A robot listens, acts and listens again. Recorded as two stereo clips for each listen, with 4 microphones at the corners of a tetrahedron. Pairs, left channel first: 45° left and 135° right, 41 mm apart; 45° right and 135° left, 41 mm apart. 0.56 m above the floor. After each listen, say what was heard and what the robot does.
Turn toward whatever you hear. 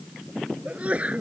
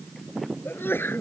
The sneeze: 75° right. Turn 75° right.
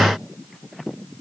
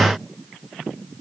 Facing where the sneeze came from. I can't hear it now.